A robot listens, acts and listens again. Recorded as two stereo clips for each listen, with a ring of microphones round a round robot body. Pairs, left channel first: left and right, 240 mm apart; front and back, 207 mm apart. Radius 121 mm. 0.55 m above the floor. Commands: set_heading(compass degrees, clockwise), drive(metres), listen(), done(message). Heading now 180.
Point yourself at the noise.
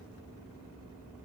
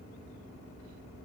listen()
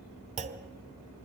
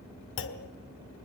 set_heading(210)
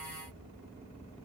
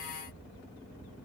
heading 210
done("Facing where the clunk came from. I can't hear it now.")